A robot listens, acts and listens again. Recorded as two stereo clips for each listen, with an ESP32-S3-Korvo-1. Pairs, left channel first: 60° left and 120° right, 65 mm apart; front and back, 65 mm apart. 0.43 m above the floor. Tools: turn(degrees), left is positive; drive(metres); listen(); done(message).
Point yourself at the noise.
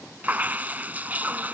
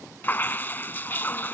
turn(degrees=-55)
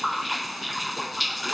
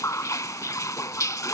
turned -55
turn(degrees=-30)
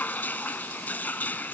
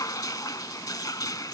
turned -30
done("Found it: dripping, straight ahead.")